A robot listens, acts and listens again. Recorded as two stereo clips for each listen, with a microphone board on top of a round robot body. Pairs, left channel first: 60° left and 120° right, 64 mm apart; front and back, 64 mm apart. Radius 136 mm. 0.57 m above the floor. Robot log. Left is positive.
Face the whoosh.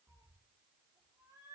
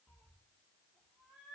cmd idle
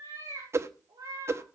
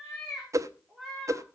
note: The whoosh: 155° right.
cmd yaw -155
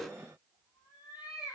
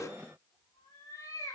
note: The whoosh is now 25° right.
cmd yaw -25
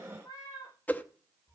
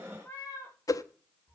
end: Found it: a whoosh, straight ahead.